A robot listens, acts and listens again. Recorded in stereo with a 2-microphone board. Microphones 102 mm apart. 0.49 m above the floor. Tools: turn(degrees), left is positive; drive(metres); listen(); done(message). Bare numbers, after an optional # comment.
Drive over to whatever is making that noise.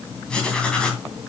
turn(30)
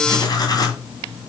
# So it is at 140° left.
turn(140)
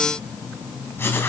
# The writing is now 20° left.
turn(20)
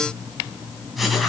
drive(1.0)
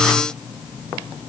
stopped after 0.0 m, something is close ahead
done("Blocked. The writing is further on, straight ahead.")